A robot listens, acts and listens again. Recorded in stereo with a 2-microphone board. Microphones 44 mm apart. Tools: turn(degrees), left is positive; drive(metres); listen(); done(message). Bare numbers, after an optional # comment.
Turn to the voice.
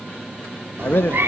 # The man speaking: about 55° left or 125° left.
turn(55)
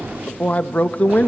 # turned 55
# So it is at 45° left.
turn(45)
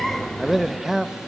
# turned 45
# The man speaking is now 10° right.
turn(-10)
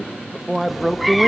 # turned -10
done("Facing the man speaking, under 1 m away.")